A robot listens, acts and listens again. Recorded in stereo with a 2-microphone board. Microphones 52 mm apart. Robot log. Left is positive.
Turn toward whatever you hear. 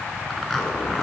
cmd yaw +30
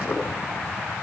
note: So it is at 150° left.
cmd yaw +150
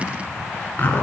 note: The zipper is now 45° left.
cmd yaw +45
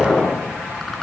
note: The zipper is now 10° left.
cmd yaw +10
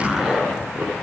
end: Facing the zipper, 2 to 4 m away.